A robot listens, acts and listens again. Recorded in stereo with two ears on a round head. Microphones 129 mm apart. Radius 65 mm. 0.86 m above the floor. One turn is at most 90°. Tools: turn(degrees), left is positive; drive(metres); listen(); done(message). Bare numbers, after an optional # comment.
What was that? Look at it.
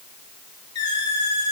# The squeak: about 30° left or 150° left.
turn(30)
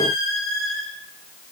done("Found it: a squeak, straight ahead.")